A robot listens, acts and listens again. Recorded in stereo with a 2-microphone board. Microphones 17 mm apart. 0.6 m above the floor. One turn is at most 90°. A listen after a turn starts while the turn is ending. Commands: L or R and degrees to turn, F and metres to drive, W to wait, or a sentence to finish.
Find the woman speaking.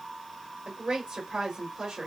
R55
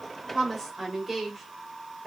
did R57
Facing the woman speaking, 1 to 2 m away.